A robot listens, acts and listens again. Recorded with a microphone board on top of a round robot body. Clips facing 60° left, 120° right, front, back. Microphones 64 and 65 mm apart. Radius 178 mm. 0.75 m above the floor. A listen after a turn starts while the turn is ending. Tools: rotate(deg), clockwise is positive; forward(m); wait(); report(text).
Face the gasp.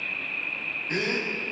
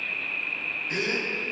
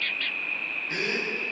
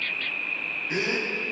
rotate(-110)
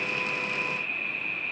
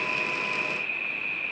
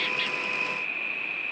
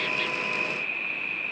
report("I heard a gasp from this way, but can't make it out now.")